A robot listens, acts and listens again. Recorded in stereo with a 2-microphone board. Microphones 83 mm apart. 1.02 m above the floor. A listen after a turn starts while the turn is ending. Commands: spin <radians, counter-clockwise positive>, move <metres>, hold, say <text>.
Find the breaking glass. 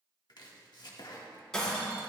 spin 0.52
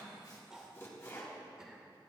hold
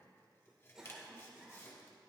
say I heard breaking glass, but can't make it out now. It was about 20° right or 140° left.